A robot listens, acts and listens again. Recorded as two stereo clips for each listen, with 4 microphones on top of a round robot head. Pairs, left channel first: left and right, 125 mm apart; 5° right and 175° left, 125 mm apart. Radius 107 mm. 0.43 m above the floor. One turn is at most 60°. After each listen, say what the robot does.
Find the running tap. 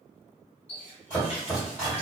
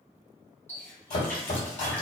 Turn 60° left.
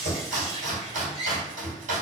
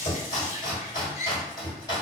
Turn 10° right.
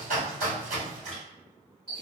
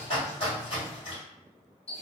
Found it: a running tap, straight ahead, 1 to 2 m away.